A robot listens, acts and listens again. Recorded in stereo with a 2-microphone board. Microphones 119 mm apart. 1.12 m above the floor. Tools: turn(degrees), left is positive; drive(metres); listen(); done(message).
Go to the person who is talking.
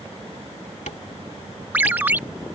listen()
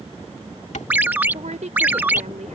turn(degrees=-90)
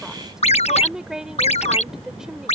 drive(metres=1.0)
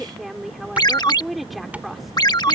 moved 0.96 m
drive(metres=1.0)
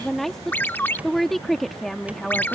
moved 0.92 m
drive(metres=1.0)
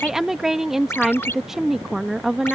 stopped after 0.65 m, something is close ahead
done("Arrived at the woman speaking, straight ahead.")